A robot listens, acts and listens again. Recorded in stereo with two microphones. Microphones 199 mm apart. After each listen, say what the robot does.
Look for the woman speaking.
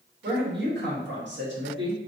Turn 90° right.
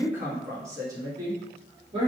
Turn 30° right.
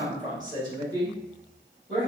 Turn 30° right.
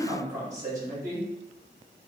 Turn 20° right.
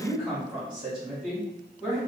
Found it: a woman speaking, straight ahead, 2 to 4 m away.